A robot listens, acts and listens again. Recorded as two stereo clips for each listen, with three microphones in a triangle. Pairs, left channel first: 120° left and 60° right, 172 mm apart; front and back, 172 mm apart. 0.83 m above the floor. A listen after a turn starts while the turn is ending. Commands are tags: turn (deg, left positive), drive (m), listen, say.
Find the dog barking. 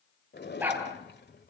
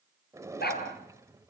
<turn deg="20"/>
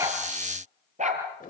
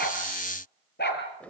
<turn deg="-15"/>
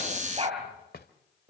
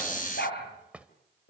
<say>Found it: a dog barking, straight ahead.</say>